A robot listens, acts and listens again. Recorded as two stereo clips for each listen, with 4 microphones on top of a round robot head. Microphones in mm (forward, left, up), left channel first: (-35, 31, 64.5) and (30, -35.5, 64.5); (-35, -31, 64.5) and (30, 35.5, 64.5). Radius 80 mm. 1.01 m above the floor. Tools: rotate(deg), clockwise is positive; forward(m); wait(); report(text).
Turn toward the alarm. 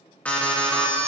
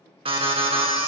rotate(-60)
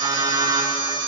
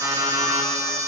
report("Facing the alarm, 1 to 2 m away.")